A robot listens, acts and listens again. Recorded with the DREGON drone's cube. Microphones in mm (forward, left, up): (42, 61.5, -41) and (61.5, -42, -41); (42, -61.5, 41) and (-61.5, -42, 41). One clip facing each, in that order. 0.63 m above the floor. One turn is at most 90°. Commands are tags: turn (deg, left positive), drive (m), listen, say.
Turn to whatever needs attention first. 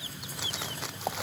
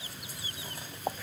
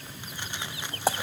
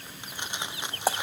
<listen/>
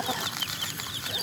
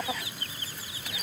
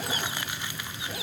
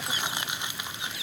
<listen/>
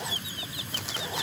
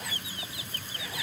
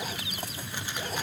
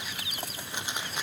<say>I can't make out anything urgent to turn to.</say>